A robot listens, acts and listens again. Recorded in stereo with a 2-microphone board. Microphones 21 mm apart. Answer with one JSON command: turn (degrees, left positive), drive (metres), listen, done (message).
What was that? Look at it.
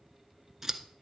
{"turn": -20}
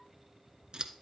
{"turn": -140}
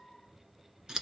{"turn": -35}
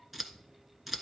{"done": "Facing the scissors, 1 to 2 m away."}